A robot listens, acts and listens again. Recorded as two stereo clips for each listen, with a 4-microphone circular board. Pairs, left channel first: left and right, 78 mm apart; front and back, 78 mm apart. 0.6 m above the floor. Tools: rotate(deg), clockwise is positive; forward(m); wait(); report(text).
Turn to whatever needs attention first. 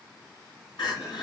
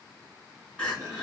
rotate(-80)
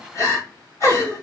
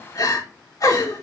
rotate(-40)
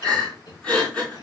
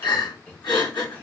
rotate(-15)
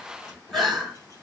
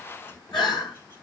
report("Found it: crying, straight ahead, over 4 m away.")